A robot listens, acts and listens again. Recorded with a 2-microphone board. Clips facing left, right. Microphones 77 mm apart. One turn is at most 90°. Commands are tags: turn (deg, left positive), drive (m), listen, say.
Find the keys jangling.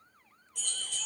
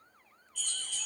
<turn deg="90"/>
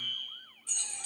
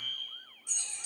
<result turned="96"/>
<turn deg="-15"/>
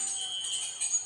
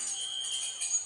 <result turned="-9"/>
<turn deg="-10"/>
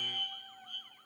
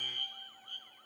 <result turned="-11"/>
<listen/>
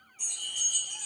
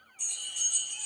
<say>Facing the keys jangling, over 4 m away.</say>